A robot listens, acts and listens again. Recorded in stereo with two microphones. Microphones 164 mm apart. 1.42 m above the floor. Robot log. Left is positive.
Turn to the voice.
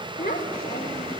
cmd yaw +90
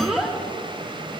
end: Found it: a child speaking, straight ahead.